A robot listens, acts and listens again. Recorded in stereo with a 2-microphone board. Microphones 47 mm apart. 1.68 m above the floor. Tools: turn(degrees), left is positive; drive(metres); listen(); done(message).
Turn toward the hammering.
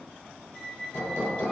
turn(degrees=70)
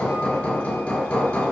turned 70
turn(degrees=35)
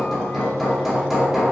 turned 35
done("Facing the hammering.")